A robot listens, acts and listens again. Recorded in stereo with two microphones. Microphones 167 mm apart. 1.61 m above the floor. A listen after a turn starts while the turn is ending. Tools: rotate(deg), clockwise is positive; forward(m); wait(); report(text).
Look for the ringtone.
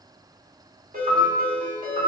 rotate(55)
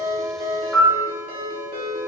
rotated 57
rotate(65)
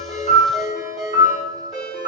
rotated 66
report("Facing the ringtone, 1 to 2 m away.")